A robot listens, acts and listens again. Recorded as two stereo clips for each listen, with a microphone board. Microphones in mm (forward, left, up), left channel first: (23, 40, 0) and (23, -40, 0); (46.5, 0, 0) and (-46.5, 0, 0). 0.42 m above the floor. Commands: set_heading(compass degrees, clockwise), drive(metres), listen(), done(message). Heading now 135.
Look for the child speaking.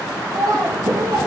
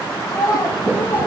set_heading(185)
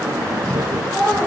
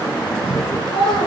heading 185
done("Facing the child speaking.")